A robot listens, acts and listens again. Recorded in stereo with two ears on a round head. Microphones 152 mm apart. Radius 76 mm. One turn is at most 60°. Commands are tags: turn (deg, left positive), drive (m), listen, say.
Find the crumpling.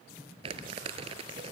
<turn deg="-35"/>
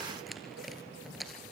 <say>Facing the crumpling.</say>